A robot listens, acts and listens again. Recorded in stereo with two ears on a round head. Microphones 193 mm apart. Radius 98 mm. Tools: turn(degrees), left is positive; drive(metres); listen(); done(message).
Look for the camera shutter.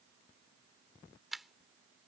turn(degrees=30)
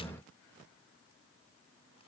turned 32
listen()
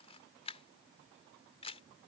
turn(degrees=150)
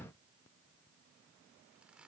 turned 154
listen()
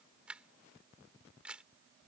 done("Facing the camera shutter.")